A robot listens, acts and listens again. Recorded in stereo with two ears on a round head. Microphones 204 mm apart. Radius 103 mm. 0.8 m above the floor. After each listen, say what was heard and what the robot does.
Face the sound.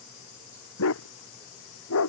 The dog barking: about 70° left or 110° left. Turn 70° left.
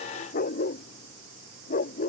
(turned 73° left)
So it is at 35° left. Turn 35° left.
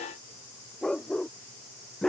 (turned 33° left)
Facing the dog barking.